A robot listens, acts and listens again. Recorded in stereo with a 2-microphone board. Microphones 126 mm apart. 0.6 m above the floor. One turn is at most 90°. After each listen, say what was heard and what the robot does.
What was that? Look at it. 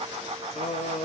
The singing: about 55° left or 125° left. Turn 55° left.
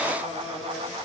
Facing the singing, 2 to 4 m away.